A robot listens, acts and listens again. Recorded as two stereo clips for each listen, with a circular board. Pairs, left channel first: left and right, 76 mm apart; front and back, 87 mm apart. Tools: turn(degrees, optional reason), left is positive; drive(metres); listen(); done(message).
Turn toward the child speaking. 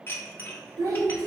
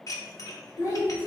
turn(degrees=-50, reason="The child speaking: 50° right.")
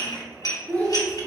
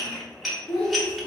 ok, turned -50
turn(degrees=25, reason="The child speaking is now 25° left.")
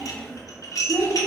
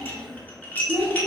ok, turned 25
turn(degrees=15, reason="The child speaking is now 15° left.")
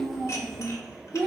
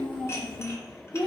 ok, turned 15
turn(degrees=15, reason="The child speaking is now 15° left.")
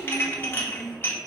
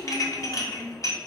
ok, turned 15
turn(degrees=15, reason="The child speaking is now 15° left.")
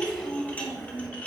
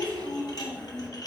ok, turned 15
done("Found it: a child speaking, straight ahead, 1 to 2 m away.")